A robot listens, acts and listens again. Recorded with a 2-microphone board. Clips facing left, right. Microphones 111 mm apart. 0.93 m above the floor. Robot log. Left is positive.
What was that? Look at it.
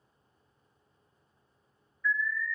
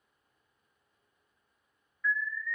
note: The alarm: about 70° right or 110° right.
cmd yaw -70
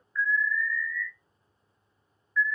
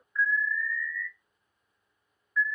note: So it is at 15° right.
cmd yaw -15
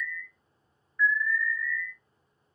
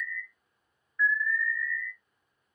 end: Found it: an alarm, straight ahead.